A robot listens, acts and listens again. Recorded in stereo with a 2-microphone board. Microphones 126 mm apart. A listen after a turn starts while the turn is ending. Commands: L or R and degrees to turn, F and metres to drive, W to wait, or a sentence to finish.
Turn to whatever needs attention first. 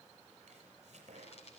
W
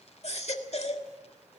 L60
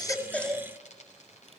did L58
Found it: a baby crying, straight ahead.